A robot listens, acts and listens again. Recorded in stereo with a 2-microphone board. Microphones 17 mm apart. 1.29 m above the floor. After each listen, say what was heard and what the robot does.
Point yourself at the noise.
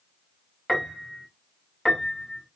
The piano: about 25° left or 155° left. Turn 25° left.
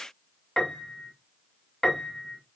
So it is at 130° left. Turn 130° left.
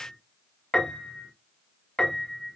The piano is now 45° left. Turn 45° left.
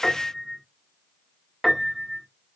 Facing the piano.